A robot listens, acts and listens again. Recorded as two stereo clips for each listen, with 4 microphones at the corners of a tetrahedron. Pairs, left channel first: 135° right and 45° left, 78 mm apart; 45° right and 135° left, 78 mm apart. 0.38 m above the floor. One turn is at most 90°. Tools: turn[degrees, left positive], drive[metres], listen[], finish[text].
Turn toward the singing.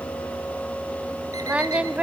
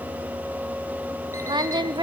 Thought: The singing: 120° left.
Action: turn[90]
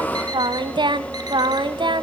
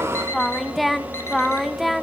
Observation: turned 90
Thought: The singing is now 45° left.
Action: turn[45]
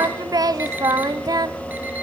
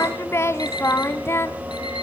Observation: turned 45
Thought: The singing is now 10° left.
Action: turn[10]
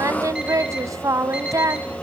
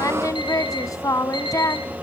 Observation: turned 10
Action: finish[Facing the singing, 1 to 2 m away.]